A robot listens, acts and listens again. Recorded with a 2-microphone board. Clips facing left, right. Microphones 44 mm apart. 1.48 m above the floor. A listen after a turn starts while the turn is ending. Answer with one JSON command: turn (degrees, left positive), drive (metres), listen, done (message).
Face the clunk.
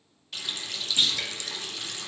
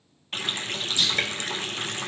{"turn": 30}
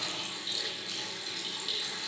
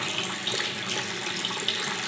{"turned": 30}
{"listen": true}
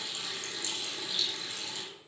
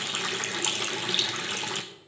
{"done": "I heard a clunk, but can't make it out now. It was about straight ahead or 120° left."}